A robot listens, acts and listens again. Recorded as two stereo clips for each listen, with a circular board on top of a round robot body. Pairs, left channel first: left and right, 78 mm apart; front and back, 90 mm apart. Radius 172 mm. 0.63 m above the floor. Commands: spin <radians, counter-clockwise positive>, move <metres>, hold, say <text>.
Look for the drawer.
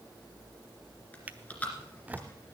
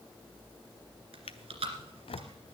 spin -0.35
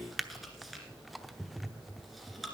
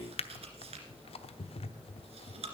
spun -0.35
say Facing the drawer.